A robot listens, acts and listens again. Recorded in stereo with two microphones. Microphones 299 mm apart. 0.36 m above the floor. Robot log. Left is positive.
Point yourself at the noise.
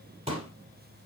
note: The pop: about 20° right or 160° right.
cmd yaw -20
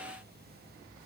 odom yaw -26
cmd idle
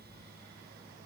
end: I heard a pop, but can't make it out now. It was about 5° left or 135° right.